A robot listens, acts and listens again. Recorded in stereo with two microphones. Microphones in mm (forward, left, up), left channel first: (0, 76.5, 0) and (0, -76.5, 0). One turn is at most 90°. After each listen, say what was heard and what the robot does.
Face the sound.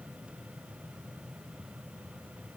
Keep listening.
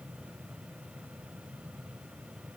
Keep listening.
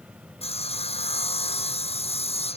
The sawing: about 40° left or 140° left. Turn 40° left.
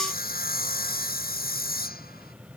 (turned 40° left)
So it is at 95° left. Turn 90° left.
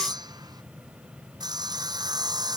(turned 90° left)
The sawing is now 25° right. Turn 25° right.
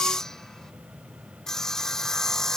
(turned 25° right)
Found it: sawing, straight ahead.